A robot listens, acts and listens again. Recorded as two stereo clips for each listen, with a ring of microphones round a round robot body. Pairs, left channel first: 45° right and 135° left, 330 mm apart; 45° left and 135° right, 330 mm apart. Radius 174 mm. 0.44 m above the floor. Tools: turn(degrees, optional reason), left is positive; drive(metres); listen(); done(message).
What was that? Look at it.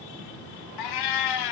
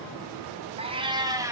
turn(degrees=-55, reason="The cat meowing: 55° right.")
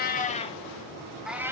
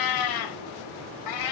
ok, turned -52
turn(degrees=55, reason="The cat meowing is now 55° left.")
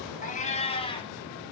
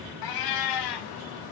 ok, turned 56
turn(degrees=30, reason="The cat meowing is now 30° left.")
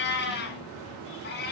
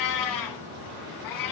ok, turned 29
turn(degrees=15, reason="The cat meowing is now 15° left.")
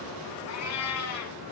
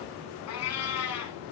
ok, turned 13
done("Facing the cat meowing, 2 to 4 m away.")